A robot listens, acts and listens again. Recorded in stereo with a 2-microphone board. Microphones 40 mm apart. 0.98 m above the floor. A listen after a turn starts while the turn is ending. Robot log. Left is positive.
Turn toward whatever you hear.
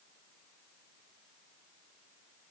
cmd idle
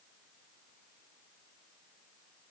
cmd idle
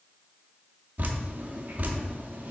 note: The dripping: about 45° right or 135° right.
cmd yaw -45
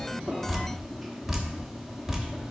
end: Facing the dripping.